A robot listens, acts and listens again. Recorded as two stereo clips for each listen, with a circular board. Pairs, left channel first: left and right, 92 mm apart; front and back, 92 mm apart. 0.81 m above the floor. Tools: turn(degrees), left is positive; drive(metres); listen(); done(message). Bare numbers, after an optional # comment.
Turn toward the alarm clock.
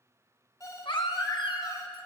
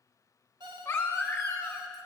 # The alarm clock: 145° left.
turn(145)
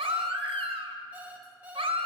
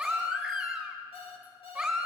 # The alarm clock is now 15° right.
turn(-15)
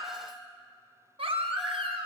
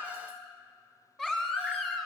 listen()
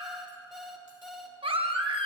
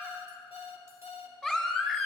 done("Facing the alarm clock, 1 to 2 m away.")